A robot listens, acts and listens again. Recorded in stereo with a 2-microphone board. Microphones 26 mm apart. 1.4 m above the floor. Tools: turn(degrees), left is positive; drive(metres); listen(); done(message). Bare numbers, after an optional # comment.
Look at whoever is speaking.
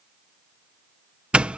listen()
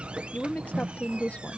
turn(90)
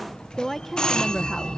# So it is at 10° left.
turn(10)
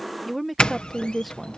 done("Facing the woman speaking.")